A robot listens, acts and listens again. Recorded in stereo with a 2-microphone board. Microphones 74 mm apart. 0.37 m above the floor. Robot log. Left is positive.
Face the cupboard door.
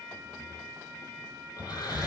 cmd yaw -30
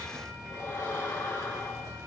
note: So it is at 135° right.
cmd yaw -135
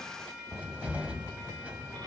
note: The cupboard door is now 20° right.
cmd yaw -20
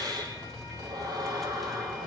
end: Found it: a cupboard door, straight ahead.